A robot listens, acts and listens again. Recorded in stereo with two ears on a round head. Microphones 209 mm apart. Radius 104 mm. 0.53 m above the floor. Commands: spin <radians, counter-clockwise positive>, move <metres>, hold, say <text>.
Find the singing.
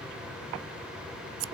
hold
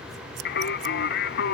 spin 0.87
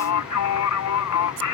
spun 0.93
spin 1.31
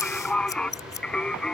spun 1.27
say Found it: singing, straight ahead.